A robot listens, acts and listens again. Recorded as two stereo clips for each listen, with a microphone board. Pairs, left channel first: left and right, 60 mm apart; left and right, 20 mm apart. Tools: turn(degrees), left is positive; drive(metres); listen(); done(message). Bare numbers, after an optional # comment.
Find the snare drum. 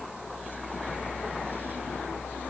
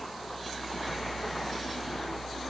listen()
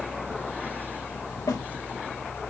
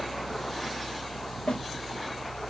# The snare drum: about 70° left or 110° left.
turn(70)
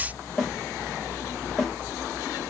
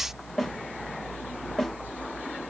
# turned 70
done("Facing the snare drum, 2 to 4 m away.")